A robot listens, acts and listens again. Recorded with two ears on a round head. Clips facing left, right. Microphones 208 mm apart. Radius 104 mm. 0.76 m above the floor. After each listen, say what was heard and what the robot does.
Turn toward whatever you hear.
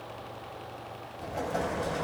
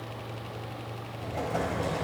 Turn 30° right.
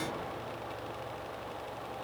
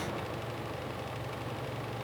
Keep listening.
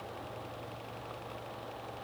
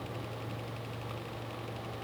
I heard an explosion, but can't make it out now. It was about 25° left or 145° right.